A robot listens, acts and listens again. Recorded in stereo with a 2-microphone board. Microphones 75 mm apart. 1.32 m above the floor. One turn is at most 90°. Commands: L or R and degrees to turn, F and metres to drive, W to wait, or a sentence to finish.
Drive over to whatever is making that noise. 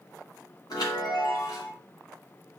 L60
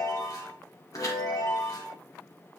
L55
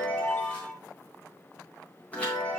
L20
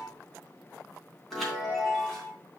F1.0
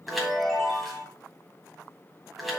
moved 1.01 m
F1.0
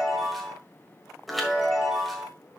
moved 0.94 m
F1.0
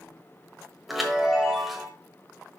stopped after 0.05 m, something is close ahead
I am next to the chime.